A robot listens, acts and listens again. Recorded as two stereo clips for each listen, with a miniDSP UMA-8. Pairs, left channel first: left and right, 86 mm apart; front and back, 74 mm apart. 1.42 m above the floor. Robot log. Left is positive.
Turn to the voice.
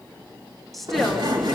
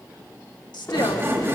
end: Facing the woman speaking.